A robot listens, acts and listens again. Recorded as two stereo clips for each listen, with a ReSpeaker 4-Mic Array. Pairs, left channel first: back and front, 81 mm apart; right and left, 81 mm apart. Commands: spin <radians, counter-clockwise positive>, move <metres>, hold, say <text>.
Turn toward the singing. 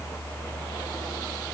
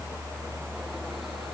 hold
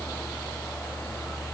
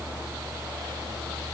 hold
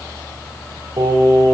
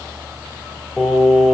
say Found it: singing, straight ahead.